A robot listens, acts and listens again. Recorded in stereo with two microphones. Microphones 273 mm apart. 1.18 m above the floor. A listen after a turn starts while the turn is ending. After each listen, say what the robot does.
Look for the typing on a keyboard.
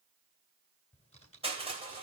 Turn 25° left.
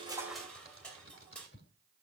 Turn 130° left.
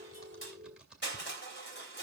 Found it: typing on a keyboard, straight ahead, 2 to 4 m away.